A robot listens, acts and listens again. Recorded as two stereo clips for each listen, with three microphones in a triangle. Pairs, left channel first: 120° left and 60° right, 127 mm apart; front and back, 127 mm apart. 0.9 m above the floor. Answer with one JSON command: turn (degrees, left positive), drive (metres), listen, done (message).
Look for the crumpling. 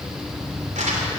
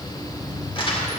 {"turn": -45}
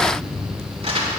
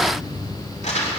{"turn": -25}
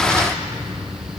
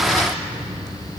{"listen": true}
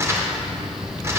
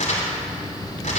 {"turn": 10}
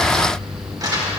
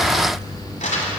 {"done": "Found it: crumpling, straight ahead."}